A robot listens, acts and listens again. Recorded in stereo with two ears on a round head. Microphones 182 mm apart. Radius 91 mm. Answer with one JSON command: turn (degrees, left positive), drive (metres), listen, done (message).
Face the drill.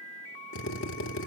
{"turn": 65}
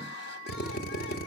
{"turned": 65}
{"turn": 45}
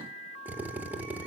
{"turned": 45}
{"turn": -10}
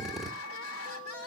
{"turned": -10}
{"done": "Found it: a drill, straight ahead, 2 to 4 m away."}